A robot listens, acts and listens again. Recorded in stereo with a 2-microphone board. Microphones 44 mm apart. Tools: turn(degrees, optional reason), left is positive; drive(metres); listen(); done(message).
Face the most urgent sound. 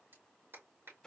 listen()
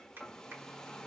listen()
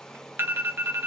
turn(degrees=-60, reason="The alarm: about 60° right or 120° right.")
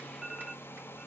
turn(degrees=-15, reason="So it is at 15° right.")
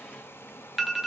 done("Facing the alarm.")